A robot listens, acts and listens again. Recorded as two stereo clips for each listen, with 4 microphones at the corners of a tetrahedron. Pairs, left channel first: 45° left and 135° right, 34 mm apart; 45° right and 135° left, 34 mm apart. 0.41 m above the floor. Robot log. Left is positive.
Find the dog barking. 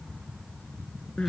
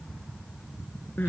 cmd idle
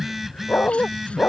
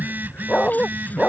note: The dog barking: 25° left.
cmd yaw +25
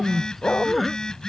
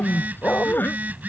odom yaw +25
end: Found it: a dog barking, straight ahead.